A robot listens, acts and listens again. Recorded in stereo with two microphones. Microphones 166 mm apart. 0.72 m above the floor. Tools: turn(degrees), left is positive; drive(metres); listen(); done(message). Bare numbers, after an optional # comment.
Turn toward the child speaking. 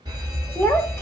turn(30)
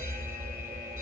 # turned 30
listen()
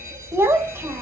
# So it is at 15° right.
turn(-15)
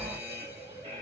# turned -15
listen()
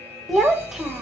done("Facing the child speaking.")